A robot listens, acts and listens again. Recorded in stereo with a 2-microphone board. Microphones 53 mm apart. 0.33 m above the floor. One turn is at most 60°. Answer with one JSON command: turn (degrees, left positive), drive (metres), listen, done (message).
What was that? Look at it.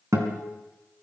{"turn": -60}
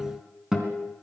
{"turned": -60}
{"turn": -10}
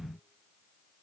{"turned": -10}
{"listen": true}
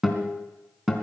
{"done": "Facing the guitar, 2 to 4 m away."}